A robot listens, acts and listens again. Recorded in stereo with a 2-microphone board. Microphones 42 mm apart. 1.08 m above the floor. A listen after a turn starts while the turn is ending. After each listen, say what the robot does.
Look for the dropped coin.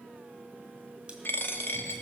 Turn 60° left.
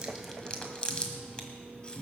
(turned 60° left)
Keep listening.
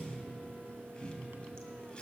I heard a dropped coin, but can't make it out now. It was about straight ahead or 60° left.